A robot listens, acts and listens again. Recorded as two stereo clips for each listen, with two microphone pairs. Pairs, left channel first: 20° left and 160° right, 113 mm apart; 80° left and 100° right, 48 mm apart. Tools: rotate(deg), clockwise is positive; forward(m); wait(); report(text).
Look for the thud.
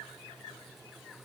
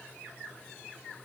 wait()
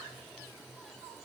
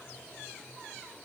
wait()
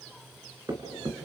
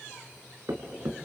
rotate(105)
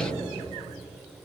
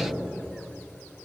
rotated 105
report("I heard a thud from this way, but can't make it out now.")